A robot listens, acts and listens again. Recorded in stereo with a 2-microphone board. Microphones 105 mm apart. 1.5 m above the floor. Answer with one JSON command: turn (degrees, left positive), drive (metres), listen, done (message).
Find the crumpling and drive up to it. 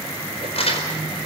{"turn": 75}
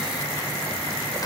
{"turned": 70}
{"turn": 35}
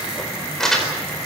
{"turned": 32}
{"drive": 1.0}
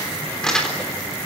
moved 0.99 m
{"drive": 1.0}
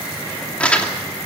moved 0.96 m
{"turn": 10}
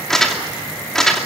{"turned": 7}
{"drive": 1.0}
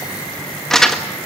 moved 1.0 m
{"drive": 1.0}
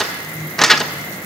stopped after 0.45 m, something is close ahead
{"done": "I am next to the crumpling."}